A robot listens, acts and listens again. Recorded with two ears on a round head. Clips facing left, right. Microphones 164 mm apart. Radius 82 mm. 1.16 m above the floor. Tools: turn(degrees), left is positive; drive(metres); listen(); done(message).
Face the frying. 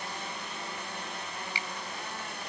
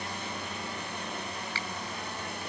listen()
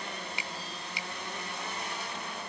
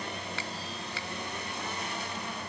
listen()
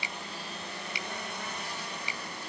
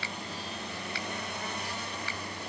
done("I can't make out frying to turn to.")